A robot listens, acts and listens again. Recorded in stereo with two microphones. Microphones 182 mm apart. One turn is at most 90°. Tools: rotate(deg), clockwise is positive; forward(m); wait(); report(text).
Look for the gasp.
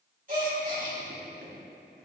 rotate(45)
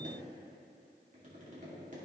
wait()
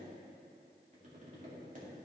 report("I heard a gasp, but can't make it out now. It was about straight ahead or 90° right.")